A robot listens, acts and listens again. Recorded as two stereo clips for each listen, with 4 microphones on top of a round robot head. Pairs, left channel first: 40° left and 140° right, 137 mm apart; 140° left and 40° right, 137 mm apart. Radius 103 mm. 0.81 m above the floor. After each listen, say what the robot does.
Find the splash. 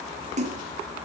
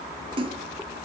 Turn 95° right.
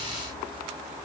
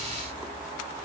Facing where the splash came from. I can't hear it now.